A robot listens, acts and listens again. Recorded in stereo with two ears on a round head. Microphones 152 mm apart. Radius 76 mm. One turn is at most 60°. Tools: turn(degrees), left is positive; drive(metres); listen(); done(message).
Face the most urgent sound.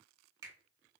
listen()
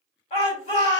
turn(degrees=40)
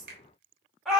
done("Found it: a shout, straight ahead, 1 to 2 m away.")